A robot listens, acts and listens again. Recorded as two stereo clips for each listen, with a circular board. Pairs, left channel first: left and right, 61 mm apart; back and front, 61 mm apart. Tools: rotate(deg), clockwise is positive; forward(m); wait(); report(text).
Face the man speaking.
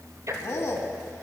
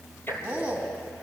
rotate(-65)
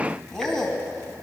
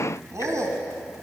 report("Found it: a man speaking, straight ahead, 2 to 4 m away.")